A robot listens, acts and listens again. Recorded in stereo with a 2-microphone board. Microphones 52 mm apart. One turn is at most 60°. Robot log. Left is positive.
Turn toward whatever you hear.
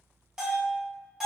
cmd yaw -30
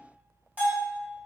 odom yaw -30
note: So it is at 140° right.
cmd yaw -60
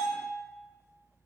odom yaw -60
note: The bell is now 90° right.
cmd yaw -60
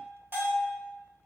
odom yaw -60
note: The bell is now 50° right.
cmd yaw -50
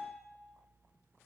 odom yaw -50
cmd idle
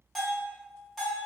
end: Facing the bell, 1 to 2 m away.